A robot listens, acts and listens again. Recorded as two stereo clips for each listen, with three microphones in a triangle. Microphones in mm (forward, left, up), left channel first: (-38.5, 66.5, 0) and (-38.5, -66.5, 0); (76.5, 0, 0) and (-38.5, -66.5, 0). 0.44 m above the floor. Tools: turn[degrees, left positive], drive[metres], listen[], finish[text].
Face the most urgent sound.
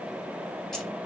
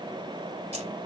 Action: listen[]
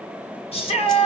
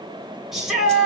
Thought: The shout: 125° left.
Action: turn[125]
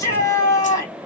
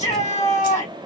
Thought: The shout is now 30° left.
Action: turn[30]
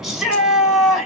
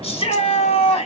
Action: finish[Found it: a shout, straight ahead.]